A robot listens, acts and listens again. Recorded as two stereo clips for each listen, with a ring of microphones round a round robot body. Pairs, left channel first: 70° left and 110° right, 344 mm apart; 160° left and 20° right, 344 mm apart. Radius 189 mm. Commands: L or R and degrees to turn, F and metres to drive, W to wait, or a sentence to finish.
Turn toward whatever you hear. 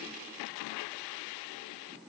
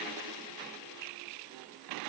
W
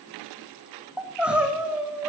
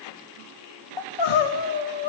L160
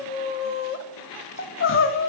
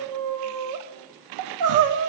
L15
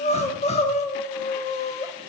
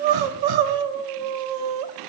Facing the crying, under 1 m away.